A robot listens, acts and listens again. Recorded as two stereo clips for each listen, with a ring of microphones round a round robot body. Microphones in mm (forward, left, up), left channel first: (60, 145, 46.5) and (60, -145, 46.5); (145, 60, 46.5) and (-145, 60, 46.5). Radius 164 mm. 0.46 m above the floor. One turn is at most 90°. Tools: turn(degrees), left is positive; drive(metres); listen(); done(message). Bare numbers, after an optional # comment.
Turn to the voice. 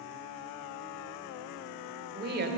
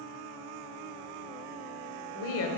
# The woman speaking: 35° right.
turn(-35)
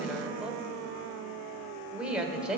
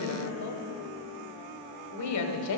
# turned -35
done("Facing the woman speaking, 1 to 2 m away.")